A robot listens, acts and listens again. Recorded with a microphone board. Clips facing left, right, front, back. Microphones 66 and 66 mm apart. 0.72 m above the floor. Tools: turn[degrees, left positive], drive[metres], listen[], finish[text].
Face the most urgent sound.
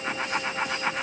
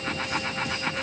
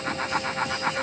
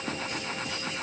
Action: listen[]
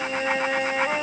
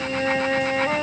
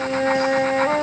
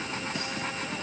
Action: listen[]
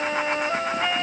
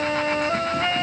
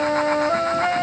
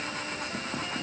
Action: finish[I can't make out anything urgent to turn to.]